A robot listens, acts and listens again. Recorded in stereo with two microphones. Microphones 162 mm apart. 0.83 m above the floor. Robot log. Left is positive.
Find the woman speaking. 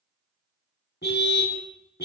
cmd idle
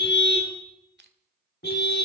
cmd idle
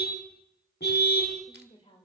note: The woman speaking: about 40° left or 140° left.
cmd yaw +40
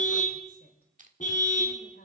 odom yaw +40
note: So it is at 100° left.
cmd yaw +100
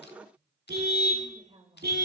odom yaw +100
note: The woman speaking is now 35° right.
cmd yaw -35
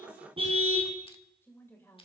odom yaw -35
note: The woman speaking is now 15° left.
cmd yaw +15
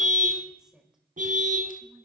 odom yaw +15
end: Found it: a woman speaking, straight ahead, over 4 m away.